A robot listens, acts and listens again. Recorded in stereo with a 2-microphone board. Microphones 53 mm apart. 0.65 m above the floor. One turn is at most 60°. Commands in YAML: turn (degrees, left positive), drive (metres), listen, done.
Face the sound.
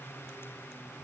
listen: true
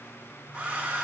turn: -30
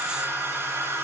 turn: -60
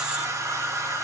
turn: -60
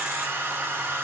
turn: -40
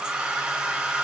turn: -15
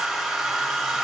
done: "Facing the hair dryer, 1 to 2 m away."